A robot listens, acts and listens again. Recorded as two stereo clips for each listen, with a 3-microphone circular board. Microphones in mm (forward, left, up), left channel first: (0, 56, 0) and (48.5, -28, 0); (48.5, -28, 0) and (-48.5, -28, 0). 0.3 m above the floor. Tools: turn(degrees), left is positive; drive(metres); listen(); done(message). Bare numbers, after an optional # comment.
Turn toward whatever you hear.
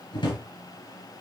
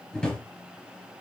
# The drawer: 80° left.
turn(80)
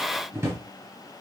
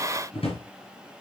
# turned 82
done("Facing the drawer, 2 to 4 m away.")